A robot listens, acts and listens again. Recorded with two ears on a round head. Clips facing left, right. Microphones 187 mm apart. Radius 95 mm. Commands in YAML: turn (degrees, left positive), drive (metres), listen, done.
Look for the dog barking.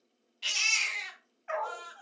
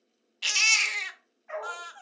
turn: 90
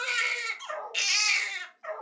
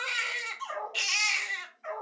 turn: 65
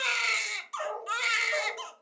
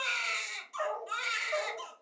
turn: 30
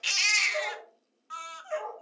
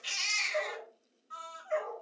done: "Facing the dog barking, 2 to 4 m away."